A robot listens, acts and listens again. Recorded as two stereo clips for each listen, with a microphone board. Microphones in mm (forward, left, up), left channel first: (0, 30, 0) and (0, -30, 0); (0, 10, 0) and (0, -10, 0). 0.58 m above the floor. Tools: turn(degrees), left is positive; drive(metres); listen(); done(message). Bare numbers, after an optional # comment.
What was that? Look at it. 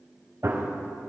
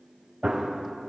# The gunshot: about 55° right or 125° right.
turn(-55)
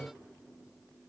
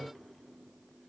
listen()
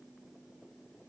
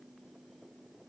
done("I heard a gunshot, but can't make it out now. It was about straight ahead or 70° right.")